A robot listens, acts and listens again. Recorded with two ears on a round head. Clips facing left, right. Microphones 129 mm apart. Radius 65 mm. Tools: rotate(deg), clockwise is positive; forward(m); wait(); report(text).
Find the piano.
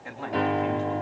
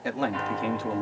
rotate(-55)
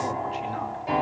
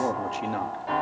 rotate(-20)
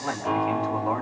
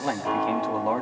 report("Facing the piano.")